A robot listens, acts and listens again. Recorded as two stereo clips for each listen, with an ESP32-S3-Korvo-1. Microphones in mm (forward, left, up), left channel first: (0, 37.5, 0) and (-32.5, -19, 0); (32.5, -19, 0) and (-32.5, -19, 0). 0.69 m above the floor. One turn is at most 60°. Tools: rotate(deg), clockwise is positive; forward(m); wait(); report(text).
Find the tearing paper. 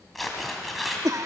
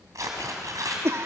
rotate(-60)
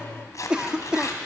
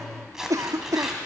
rotate(-60)
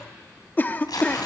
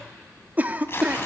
rotate(-50)
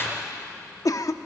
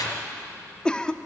report("Found it: tearing paper, straight ahead, 2 to 4 m away.")